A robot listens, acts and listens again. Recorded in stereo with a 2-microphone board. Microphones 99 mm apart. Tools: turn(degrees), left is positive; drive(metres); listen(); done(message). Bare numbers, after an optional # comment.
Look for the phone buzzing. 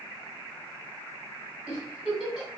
listen()
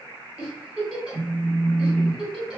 # The phone buzzing: about 55° right or 125° right.
turn(-55)
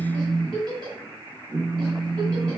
# So it is at 50° right.
turn(-50)
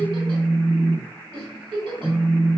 done("Found it: a phone buzzing, straight ahead, under 1 m away.")